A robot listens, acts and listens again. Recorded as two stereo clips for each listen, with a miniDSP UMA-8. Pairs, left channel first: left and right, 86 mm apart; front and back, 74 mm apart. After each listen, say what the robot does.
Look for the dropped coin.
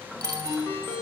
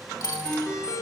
Turn 40° right.
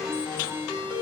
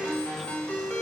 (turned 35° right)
I heard a dropped coin from this way, but can't make it out now.